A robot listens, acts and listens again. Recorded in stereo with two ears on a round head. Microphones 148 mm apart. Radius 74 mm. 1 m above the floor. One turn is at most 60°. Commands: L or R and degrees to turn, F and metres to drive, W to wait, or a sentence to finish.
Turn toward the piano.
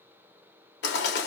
W
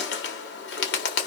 W
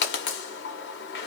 I can't make out a piano to turn to.